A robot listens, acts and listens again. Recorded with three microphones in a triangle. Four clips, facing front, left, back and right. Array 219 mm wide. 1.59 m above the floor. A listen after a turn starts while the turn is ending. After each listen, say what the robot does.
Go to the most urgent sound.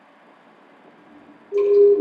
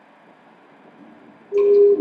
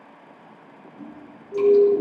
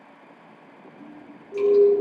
Turn 55° left.
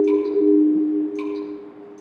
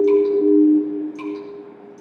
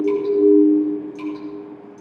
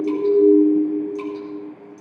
Drive 1.0 m forward.
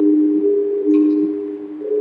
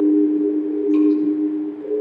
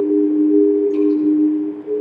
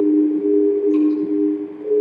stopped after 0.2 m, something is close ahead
Blocked. The siren is further on, straight ahead.